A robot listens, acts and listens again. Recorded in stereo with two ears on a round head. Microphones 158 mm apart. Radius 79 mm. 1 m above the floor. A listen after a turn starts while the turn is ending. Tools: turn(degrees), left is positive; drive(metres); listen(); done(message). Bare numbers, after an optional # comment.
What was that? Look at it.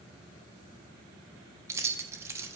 # The keys jangling: about 15° right or 165° right.
turn(-15)
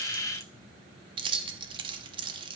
# So it is at 150° right.
turn(-150)
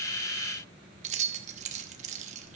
# The keys jangling is now 40° right.
turn(-40)
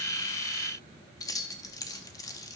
# The keys jangling is now 20° left.
turn(20)
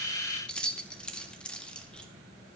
done("Facing the keys jangling, 1 to 2 m away.")